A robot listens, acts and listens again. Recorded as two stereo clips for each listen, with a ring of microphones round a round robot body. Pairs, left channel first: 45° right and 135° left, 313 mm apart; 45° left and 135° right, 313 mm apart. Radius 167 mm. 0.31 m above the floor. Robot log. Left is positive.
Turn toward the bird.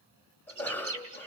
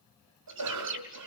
note: The bird: 175° left.
cmd yaw +175
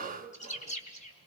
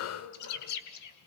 note: The bird is now 20° left.
cmd yaw +20
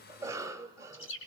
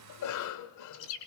end: Facing the bird, 2 to 4 m away.